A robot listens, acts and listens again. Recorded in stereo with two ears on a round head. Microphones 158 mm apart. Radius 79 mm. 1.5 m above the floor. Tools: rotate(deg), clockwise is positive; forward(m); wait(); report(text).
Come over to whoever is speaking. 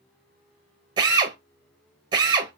wait()
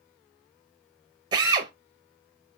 wait()
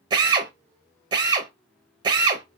report("I can't make out anyone speaking to turn to.")